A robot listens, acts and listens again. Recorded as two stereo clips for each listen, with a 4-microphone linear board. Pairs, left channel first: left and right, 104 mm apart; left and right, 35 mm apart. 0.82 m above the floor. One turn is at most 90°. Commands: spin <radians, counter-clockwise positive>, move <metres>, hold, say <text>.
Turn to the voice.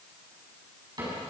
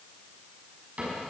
hold
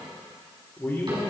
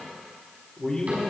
spin 0.35
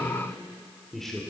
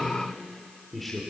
say Found it: a man speaking, straight ahead, 2 to 4 m away.